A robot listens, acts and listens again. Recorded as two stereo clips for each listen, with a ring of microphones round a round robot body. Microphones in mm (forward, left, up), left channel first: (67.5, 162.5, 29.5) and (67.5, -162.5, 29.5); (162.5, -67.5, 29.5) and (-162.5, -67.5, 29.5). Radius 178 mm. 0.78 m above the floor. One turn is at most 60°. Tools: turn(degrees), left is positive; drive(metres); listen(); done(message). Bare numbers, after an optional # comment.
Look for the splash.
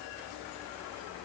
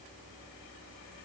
listen()
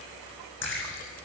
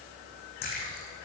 # The splash: 35° left.
turn(35)
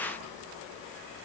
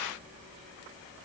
done("I heard a splash from this way, but can't make it out now.")